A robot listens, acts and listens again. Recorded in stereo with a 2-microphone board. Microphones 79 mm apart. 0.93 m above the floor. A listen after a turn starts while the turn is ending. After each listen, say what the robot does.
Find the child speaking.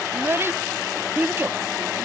Turn 30° right.
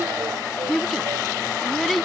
Facing the child speaking.